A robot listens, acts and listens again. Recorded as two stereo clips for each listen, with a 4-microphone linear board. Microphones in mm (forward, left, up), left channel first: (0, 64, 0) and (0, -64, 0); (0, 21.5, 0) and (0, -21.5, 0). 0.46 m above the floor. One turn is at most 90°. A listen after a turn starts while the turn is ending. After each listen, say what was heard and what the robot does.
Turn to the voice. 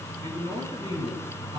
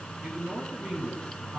The man speaking: about 65° right or 115° right. Turn 65° right.
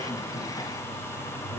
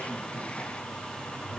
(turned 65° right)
Keep listening.
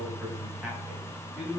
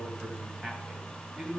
Facing the man speaking.